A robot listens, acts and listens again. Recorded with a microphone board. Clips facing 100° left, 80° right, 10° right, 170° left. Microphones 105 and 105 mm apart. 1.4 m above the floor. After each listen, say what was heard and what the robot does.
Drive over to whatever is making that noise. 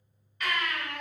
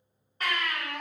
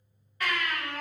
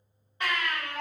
The baby crying: 125° right. Turn 125° right.
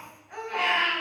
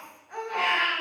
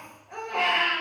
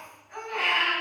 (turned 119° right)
The baby crying is now 10° right. Turn 10° right.
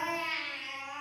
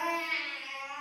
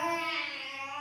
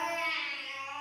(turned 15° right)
Drive 1.0 m forward.
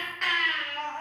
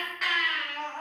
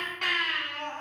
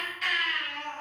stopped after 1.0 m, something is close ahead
The baby crying is now 10° left. Turn 10° left.
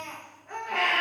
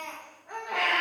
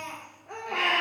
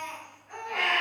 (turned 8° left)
I am next to the baby crying.